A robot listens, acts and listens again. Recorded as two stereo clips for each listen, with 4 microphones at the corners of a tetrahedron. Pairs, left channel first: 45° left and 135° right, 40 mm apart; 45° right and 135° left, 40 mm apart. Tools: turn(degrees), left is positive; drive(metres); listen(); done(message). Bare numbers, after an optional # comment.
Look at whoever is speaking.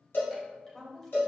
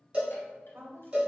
# The woman speaking: 130° left.
turn(130)
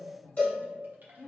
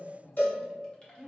# The woman speaking is now 50° left.
turn(50)
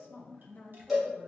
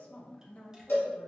# The woman speaking is now 10° left.
turn(10)
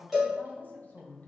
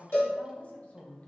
done("Facing the woman speaking.")